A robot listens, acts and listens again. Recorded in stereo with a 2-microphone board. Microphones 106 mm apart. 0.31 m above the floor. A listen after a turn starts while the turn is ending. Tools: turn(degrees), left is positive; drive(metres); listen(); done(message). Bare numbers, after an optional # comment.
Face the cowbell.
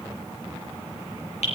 listen()
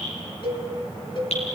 # The cowbell: about 50° left or 130° left.
turn(50)
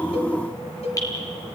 # So it is at 80° left.
turn(80)
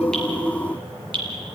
listen()
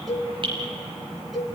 done("Found it: a cowbell, straight ahead.")